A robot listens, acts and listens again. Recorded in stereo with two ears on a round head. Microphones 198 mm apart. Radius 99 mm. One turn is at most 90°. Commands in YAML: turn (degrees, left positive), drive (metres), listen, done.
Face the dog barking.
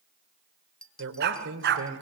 turn: -55
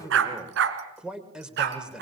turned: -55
turn: -50
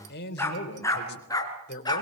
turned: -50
turn: 20
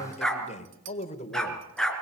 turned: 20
done: "Found it: a dog barking, straight ahead, 2 to 4 m away."